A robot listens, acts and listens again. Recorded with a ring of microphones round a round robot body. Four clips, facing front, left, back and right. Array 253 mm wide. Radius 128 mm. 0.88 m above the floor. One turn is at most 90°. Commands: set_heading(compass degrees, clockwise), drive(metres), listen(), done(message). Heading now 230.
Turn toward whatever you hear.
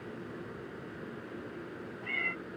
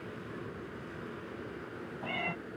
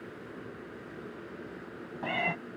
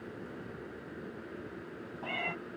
set_heading(140)
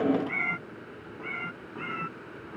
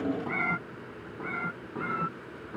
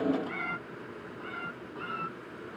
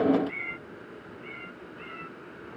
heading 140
set_heading(60)
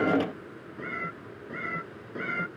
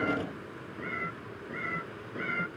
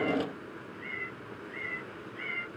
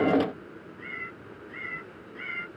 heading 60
set_heading(30)
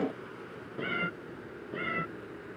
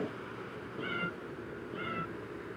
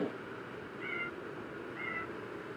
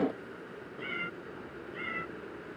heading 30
set_heading(20)
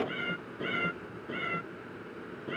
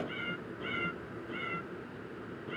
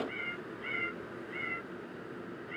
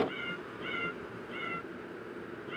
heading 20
done("Facing the cat meowing.")